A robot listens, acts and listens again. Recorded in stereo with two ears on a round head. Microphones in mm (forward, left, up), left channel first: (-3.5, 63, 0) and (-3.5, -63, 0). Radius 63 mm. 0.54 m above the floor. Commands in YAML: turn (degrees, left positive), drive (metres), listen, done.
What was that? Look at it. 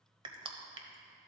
turn: -40
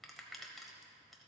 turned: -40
done: "Facing the crushing."